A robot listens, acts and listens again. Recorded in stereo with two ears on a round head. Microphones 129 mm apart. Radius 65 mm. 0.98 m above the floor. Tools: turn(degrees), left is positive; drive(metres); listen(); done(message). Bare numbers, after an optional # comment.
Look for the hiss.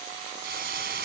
turn(-90)
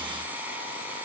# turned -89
listen()
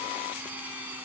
listen()
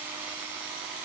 done("I heard a hiss from this way, but can't make it out now.")